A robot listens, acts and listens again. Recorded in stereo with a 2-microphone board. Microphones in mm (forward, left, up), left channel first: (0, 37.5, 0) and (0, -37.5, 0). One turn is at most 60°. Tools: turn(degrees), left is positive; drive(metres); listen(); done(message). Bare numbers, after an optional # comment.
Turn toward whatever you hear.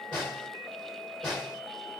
turn(30)
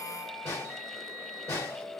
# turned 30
# So it is at 140° left.
turn(60)
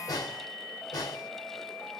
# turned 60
# The snare drum is now 80° left.
turn(60)
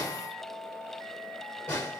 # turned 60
# The snare drum is now 30° left.
turn(30)
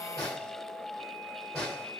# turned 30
done("Facing the snare drum, 1 to 2 m away.")